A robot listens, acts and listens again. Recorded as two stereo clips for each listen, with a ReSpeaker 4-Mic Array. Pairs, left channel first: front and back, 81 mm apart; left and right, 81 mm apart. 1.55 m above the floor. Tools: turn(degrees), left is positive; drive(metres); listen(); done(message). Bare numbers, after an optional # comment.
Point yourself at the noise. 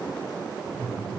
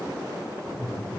# The laughter: 105° left.
turn(105)
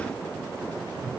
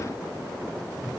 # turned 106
listen()
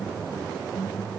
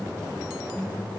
done("Found it: laughter, straight ahead.")